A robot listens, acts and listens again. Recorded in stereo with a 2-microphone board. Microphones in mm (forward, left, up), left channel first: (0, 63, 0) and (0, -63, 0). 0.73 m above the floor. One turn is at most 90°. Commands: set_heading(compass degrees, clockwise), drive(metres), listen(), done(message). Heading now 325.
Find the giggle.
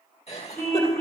set_heading(265)
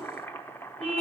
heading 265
listen()
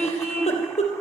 set_heading(205)
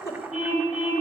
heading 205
set_heading(180)
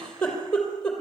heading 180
done("Facing the giggle.")